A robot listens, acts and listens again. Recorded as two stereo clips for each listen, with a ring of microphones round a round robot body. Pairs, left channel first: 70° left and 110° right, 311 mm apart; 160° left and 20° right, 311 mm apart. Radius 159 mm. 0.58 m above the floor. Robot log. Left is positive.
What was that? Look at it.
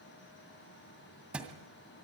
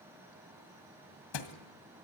note: The thud: 160° left.
cmd yaw +160
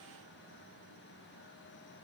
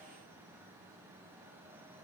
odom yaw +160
end: I heard a thud from this way, but can't make it out now.